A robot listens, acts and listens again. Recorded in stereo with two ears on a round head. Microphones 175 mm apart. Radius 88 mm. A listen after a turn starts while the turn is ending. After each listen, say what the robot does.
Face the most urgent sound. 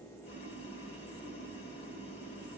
Keep listening.
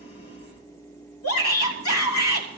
Turn 90° left.
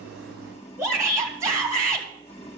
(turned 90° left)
Turn 15° right.
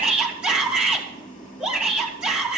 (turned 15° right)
Found it: a shout, straight ahead, 2 to 4 m away.